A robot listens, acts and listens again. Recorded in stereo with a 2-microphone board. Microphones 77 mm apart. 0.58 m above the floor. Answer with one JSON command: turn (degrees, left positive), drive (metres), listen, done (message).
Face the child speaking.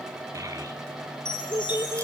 {"turn": -50}
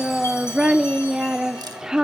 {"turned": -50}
{"turn": -10}
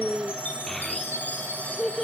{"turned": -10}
{"done": "Found it: a child speaking, straight ahead."}